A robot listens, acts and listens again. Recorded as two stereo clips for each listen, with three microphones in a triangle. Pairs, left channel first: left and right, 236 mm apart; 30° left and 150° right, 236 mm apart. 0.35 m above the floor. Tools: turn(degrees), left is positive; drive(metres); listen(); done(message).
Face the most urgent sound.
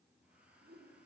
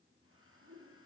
listen()
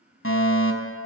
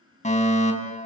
turn(degrees=85)
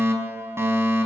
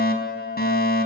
turn(degrees=-10)
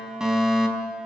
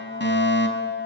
done("Facing the fire alarm.")